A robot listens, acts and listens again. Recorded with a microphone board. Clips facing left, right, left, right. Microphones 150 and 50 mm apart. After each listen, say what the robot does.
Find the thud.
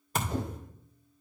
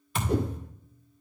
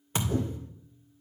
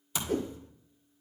Turn 40° left.
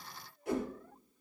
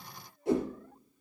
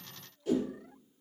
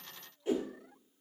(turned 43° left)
Keep listening.
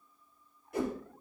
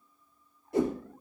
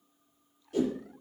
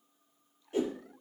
I heard a thud, but can't make it out now. It was about straight ahead or 95° left.